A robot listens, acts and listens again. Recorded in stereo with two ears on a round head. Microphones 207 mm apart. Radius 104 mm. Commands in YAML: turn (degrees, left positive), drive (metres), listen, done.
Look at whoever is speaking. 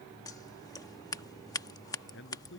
turn: 55
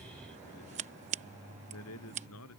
turn: 70
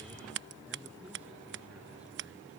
listen: true
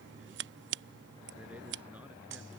listen: true
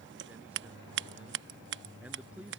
done: "Found it: a man speaking, straight ahead."